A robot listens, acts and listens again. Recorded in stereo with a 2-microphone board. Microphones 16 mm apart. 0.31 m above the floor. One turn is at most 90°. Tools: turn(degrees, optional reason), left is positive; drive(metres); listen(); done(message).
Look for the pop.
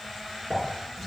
turn(degrees=-60, reason="The pop: about 60° right or 120° right.")
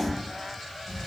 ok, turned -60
listen()
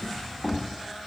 done("I heard a pop, but can't make it out now. It was about straight ahead or 60° right.")